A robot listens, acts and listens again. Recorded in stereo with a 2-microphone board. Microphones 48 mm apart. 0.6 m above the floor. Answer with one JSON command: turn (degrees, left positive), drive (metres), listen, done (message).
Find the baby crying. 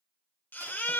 {"turn": 40}
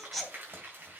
{"done": "Found it: a baby crying, straight ahead, 1 to 2 m away."}